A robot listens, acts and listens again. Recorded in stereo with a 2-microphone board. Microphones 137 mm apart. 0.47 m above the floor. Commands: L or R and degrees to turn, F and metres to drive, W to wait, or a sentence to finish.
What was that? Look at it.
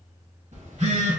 R60
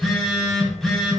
Found it: a phone buzzing, straight ahead, under 1 m away.